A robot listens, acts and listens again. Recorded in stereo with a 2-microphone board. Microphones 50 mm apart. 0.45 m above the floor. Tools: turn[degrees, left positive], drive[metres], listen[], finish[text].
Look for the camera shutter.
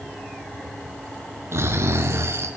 Action: listen[]
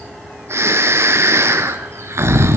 Action: listen[]
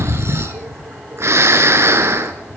Action: finish[I can't make out a camera shutter, only snoring.]